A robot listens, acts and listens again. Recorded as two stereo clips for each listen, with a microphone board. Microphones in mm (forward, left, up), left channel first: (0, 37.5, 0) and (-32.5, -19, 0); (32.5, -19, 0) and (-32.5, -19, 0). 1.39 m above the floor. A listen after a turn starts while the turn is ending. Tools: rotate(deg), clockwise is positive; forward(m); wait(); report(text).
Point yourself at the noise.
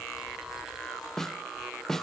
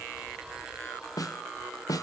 rotate(25)
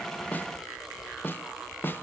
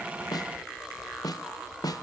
report("Facing the snare drum.")